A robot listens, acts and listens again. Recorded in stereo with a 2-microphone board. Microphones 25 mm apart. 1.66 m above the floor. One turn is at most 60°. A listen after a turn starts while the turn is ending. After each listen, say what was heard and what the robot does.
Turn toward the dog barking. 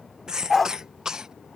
Turn 30° left.
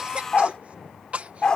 So it is at 140° left. Turn 60° left.
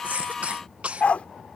The dog barking is now 80° left. Turn 60° left.
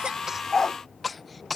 The dog barking is now 20° left. Turn 20° left.
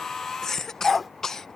Found it: a dog barking, straight ahead.